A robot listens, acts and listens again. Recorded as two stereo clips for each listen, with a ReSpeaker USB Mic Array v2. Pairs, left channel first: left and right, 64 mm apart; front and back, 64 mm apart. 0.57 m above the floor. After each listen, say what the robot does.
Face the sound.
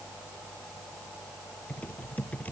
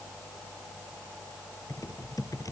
Turn 25° left.
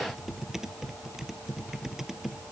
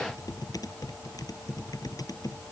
Facing the typing on a keyboard.